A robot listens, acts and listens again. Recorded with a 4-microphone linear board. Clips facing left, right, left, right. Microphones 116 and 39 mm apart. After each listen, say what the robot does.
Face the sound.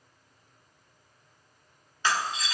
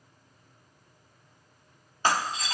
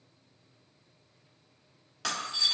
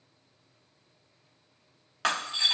Turn 50° right.
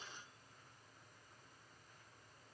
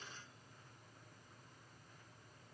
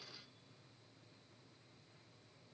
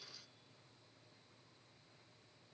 Keep listening.
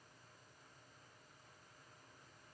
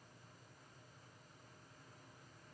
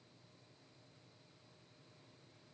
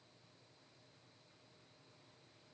I heard breaking glass, but can't make it out now. It was about straight ahead or 80° right.